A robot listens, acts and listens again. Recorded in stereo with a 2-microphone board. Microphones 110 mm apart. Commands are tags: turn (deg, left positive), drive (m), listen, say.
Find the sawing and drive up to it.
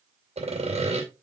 <turn deg="-90"/>
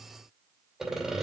<drive m="1.0"/>
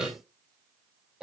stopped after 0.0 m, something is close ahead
<say>Blocked. The sawing is further on, straight ahead.</say>